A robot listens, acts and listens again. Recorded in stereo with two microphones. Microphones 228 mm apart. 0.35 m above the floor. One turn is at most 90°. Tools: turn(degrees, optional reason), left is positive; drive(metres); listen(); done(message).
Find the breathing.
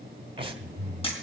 turn(degrees=-25, reason="The breathing: about 25° right or 155° right.")
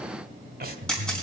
turn(degrees=-90, reason="So it is at 130° right.")
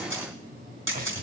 turn(degrees=-50, reason="The breathing is now 50° right.")
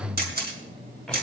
done("Found it: breathing, straight ahead.")